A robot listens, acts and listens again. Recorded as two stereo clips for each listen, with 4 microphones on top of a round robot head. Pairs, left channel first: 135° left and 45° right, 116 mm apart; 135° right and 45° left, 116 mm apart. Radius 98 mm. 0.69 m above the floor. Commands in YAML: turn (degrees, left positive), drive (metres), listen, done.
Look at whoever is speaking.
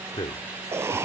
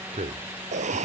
turn: 75
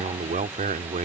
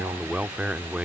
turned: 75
turn: -35
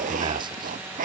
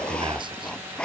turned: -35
listen: true
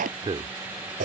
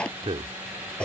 done: "Found it: a man speaking, straight ahead."